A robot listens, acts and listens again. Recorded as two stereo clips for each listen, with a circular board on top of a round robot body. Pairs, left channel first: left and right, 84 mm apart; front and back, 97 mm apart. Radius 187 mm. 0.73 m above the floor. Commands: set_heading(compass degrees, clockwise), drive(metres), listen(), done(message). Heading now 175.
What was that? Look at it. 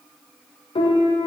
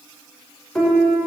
set_heading(90)
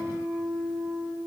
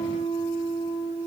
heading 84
set_heading(94)
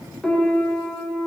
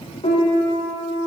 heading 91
done("Facing the piano.")